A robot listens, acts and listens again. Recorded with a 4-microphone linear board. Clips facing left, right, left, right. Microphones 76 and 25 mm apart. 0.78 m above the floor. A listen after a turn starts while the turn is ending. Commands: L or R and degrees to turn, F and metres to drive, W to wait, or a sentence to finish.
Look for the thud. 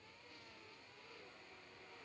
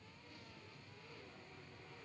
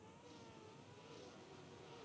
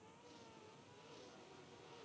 W
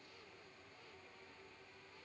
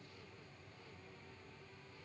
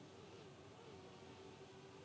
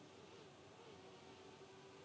W
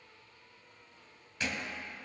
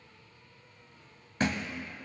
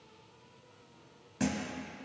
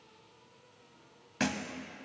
R50
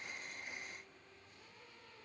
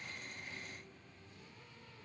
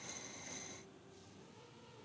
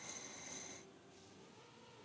W
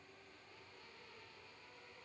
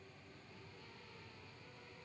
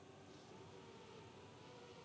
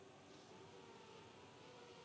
I heard a thud, but can't make it out now. It was about straight ahead or 80° right.